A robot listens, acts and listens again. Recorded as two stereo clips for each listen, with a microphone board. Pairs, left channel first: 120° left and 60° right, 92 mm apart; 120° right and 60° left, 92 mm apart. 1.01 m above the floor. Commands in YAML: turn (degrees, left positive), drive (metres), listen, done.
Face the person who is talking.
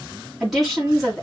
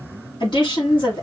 turn: -150
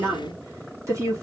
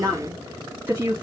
turn: -10
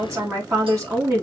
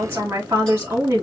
done: "Found it: a woman speaking, straight ahead, 1 to 2 m away."